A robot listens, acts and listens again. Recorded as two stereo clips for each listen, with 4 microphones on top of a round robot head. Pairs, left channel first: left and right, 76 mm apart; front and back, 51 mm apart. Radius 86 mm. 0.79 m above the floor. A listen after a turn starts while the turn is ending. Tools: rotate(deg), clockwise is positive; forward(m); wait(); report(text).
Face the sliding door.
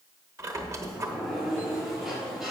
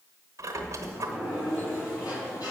report("Found it: a sliding door, straight ahead, 2 to 4 m away.")